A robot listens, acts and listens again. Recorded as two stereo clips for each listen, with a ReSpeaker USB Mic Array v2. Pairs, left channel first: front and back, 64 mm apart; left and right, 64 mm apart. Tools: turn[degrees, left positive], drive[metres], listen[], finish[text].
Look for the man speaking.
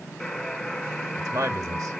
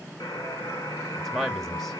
Thought: The man speaking: 175° left.
Action: turn[175]
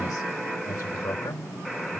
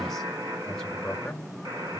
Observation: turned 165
Thought: The man speaking is now 10° left.
Action: turn[10]
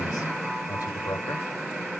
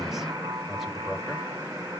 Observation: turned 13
Action: listen[]
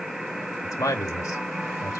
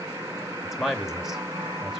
Action: finish[Found it: a man speaking, straight ahead.]